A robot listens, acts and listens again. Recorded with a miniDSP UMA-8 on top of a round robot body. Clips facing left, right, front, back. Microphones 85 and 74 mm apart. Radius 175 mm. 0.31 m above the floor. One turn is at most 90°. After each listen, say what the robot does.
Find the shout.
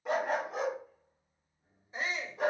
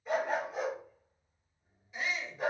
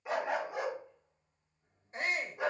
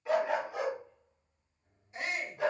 Turn 45° left.
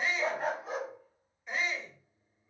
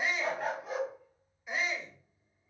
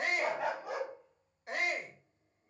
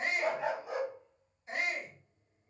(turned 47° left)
Facing the shout.